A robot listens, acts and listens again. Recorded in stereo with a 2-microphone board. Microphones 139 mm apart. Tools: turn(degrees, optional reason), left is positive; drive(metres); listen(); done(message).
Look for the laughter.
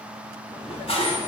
turn(degrees=55, reason="The laughter: about 55° left or 125° left.")
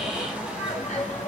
turn(degrees=60, reason="So it is at 60° left.")
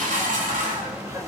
turn(degrees=-20, reason="The laughter is now 20° right.")
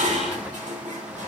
listen()
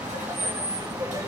turn(degrees=-25, reason="The laughter is now 25° right.")
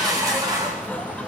turn(degrees=10, reason="The laughter is now 10° left.")
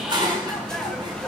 done("Facing the laughter, 2 to 4 m away.")